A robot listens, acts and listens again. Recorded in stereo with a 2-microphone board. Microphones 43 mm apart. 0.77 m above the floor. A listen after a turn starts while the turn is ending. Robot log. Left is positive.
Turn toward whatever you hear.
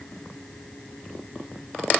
cmd idle
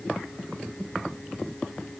cmd idle
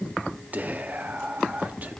note: The whispering: about 40° right or 140° right.
cmd yaw -40
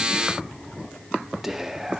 note: So it is at 10° right.
cmd yaw -10
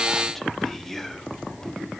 end: Found it: whispering, straight ahead.